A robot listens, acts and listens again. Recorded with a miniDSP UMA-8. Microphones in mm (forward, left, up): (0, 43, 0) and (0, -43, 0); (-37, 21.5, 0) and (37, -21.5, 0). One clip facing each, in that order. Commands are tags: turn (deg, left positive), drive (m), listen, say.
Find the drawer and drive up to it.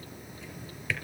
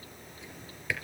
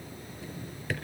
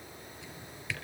<turn deg="-170"/>
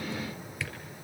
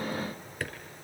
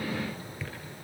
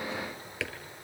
<turn deg="-50"/>
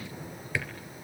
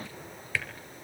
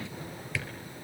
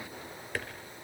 <turn deg="10"/>
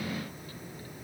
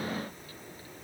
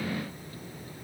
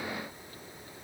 <listen/>
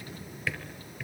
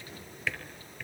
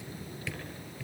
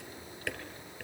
<drive m="1.0"/>
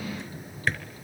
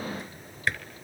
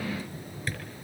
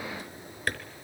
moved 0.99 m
<drive m="1.0"/>
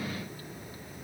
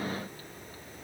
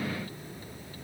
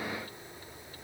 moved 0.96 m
<listen/>
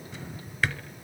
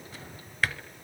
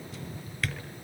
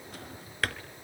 <drive m="1.0"/>
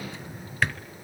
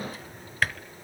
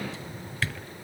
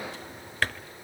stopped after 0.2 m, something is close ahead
<say>I am next to the drawer.</say>